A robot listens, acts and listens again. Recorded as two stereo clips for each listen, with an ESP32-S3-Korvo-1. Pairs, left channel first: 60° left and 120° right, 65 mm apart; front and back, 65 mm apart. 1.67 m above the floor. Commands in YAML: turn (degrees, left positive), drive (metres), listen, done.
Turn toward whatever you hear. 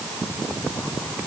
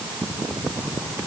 listen: true
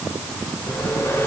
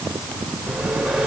turn: 100
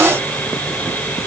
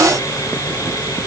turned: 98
done: "Found it: sawing, straight ahead, 2 to 4 m away."